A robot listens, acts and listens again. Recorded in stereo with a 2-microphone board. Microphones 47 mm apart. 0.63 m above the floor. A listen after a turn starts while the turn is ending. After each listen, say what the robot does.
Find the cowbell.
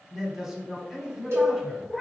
Turn 70° right.
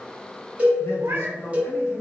Turn 30° right.
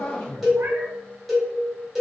Facing the cowbell.